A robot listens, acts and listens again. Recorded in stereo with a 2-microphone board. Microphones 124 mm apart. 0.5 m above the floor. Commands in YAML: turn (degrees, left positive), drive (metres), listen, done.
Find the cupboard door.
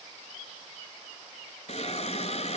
listen: true
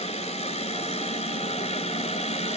listen: true
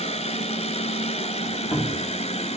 turn: 40
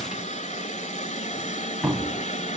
done: "Found it: a cupboard door, straight ahead."